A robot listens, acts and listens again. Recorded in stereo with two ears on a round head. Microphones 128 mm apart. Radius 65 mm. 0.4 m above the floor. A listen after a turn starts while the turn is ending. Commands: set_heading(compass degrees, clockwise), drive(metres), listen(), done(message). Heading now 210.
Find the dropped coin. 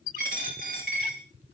set_heading(270)
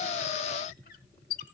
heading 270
listen()
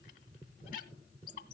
done("I heard a dropped coin, but can't make it out now. It was about straight ahead or 60° right.")